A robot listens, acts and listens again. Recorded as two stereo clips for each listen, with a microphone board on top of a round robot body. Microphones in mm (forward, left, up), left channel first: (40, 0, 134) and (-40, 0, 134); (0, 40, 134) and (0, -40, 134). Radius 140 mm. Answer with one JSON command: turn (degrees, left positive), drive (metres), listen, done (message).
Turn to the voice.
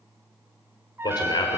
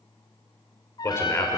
{"turn": 30}
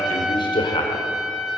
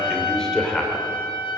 {"done": "Facing the man speaking, 2 to 4 m away."}